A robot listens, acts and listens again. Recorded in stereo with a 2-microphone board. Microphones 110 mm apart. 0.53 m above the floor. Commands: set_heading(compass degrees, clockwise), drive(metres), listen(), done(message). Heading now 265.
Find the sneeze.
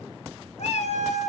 listen()
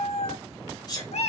set_heading(230)
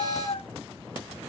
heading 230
listen()
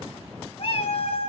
done("I heard a sneeze, but can't make it out now. It was about straight ahead or 110° left.")